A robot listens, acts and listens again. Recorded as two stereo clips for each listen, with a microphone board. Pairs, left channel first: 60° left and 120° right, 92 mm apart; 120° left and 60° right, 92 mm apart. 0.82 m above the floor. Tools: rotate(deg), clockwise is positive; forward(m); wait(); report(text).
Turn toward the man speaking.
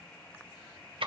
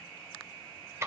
wait()
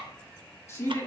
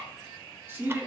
report("Facing the man speaking.")